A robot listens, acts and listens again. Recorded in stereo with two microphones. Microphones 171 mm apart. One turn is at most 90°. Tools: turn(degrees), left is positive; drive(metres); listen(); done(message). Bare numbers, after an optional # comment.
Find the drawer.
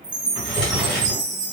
turn(30)
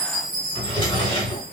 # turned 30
# So it is at 150° left.
turn(90)
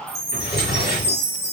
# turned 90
# The drawer is now 100° left.
turn(90)
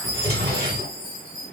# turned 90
# The drawer is now 45° left.
turn(45)
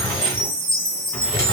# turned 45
# The drawer is now 15° left.
turn(15)
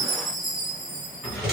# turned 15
done("Facing the drawer, 1 to 2 m away.")